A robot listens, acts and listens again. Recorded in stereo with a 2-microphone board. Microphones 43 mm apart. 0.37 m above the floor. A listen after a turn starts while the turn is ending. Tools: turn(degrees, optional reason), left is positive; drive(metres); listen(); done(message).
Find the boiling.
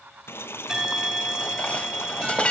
turn(degrees=70, reason="The boiling: about 70° left or 110° left.")
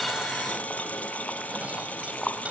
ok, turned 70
turn(degrees=35, reason="So it is at 35° left.")
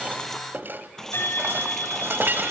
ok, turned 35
turn(degrees=10, reason="The boiling is now 10° left.")
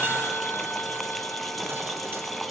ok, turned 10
done("Found it: boiling, straight ahead, 1 to 2 m away.")